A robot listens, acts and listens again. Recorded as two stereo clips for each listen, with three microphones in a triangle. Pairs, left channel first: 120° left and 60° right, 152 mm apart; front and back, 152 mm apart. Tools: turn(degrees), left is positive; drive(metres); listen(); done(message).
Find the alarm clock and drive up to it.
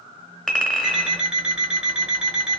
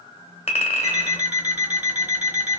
turn(degrees=-140)
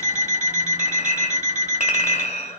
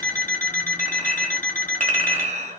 turn(degrees=-25)
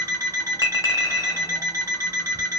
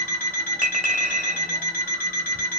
drive(metres=1.0)
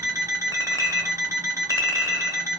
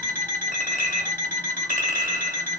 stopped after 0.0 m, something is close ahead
turn(degrees=10)
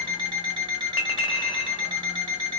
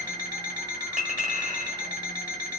done("Blocked. The alarm clock is further on, straight ahead.")